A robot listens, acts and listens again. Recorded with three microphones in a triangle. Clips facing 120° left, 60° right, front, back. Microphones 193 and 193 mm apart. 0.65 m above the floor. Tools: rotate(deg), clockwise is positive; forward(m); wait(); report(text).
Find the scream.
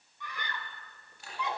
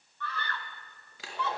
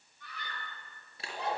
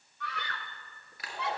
rotate(165)
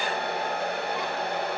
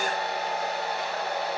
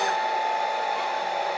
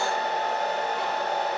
wait()
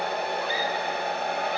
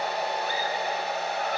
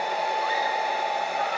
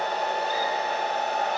wait()
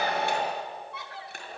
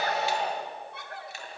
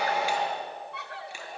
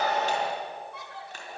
rotate(20)
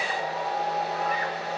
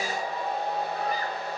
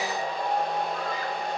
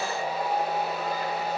wait()
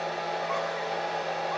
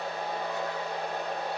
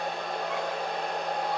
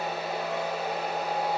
wait()
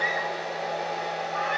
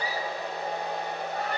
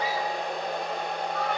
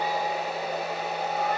report("Facing where the scream came from. I can't hear it now.")